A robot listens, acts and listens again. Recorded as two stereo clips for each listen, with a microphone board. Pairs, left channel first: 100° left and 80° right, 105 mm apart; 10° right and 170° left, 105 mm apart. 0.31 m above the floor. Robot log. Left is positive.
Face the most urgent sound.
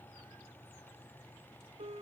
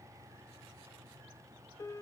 cmd idle
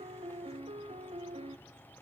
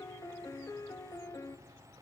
cmd idle
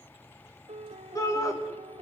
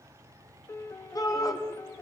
note: The shout: 45° left.
cmd yaw +45
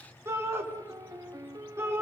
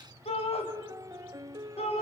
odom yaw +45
note: The shout is now 15° right.
cmd yaw -15
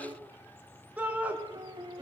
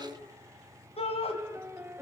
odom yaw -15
end: Facing the shout, 2 to 4 m away.